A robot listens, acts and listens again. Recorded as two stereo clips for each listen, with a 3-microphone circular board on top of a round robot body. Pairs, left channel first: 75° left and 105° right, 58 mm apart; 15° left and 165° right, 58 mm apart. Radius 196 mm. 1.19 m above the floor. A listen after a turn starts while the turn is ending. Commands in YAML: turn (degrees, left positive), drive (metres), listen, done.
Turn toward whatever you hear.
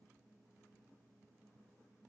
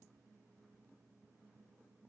listen: true
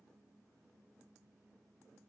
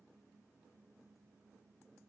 listen: true
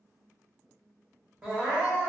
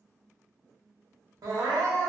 turn: 180
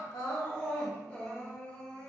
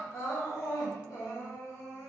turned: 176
done: "Found it: crying, straight ahead, under 1 m away."